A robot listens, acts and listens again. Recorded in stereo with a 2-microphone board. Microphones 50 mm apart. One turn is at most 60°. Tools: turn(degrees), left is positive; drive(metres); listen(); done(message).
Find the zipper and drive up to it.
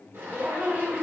turn(degrees=-60)
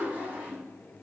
turn(degrees=-40)
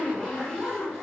turn(degrees=10)
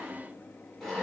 drive(metres=1.0)
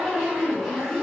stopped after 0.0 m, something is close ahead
done("Something is in my way. I am facing the zipper but have not reached it.")